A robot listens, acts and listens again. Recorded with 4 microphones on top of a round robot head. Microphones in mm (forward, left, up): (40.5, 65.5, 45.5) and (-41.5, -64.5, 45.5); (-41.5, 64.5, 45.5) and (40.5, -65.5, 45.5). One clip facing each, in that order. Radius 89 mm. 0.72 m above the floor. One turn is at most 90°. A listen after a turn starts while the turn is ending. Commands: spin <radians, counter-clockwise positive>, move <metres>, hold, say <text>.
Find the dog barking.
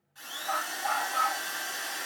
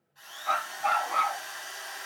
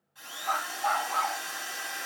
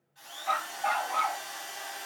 spin -1.57
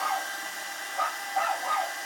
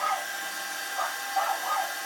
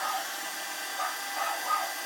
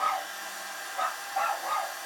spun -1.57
spin -0.26
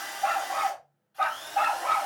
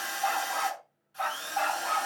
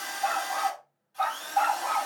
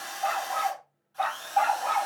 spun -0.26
spin 0.26
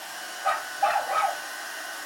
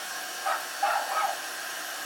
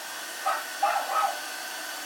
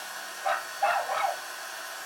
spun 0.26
say Found it: a dog barking, straight ahead, 2 to 4 m away.